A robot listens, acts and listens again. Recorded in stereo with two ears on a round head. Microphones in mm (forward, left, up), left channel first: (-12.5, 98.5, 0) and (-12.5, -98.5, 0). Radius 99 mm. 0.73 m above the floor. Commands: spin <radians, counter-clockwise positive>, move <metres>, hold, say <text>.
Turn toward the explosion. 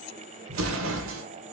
spin -1.22
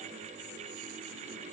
hold
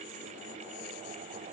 say I heard an explosion, but can't make it out now. It was about straight ahead or 40° right.